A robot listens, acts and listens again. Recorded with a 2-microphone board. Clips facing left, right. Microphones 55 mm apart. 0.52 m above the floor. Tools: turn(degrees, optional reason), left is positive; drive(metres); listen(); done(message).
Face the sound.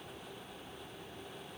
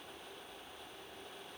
listen()
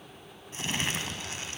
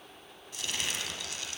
turn(degrees=30, reason="The crumpling: about 30° left or 150° left.")
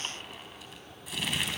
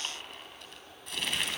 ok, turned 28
done("Facing the crumpling, 2 to 4 m away.")